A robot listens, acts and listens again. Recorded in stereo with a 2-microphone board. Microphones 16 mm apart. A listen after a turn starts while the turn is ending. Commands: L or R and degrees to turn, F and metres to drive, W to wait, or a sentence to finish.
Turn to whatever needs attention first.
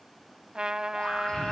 L65
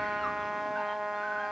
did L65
W
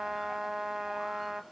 W
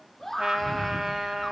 Facing the scream, over 4 m away.